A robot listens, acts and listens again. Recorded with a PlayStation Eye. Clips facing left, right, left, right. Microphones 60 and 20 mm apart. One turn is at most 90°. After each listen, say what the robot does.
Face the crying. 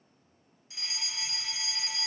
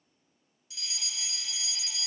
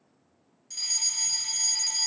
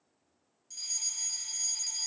Keep listening.
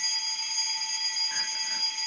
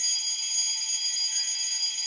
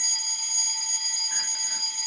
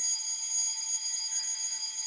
Keep listening.
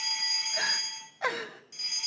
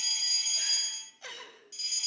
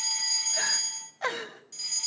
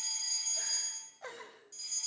Turn 60° left.
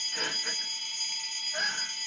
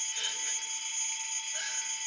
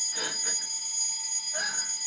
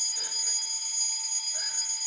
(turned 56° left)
Keep listening.
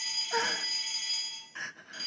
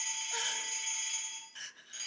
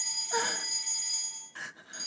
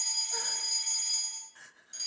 Turn 45° left.
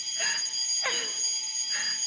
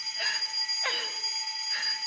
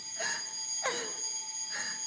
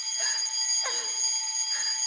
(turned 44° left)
Found it: crying, straight ahead, 1 to 2 m away.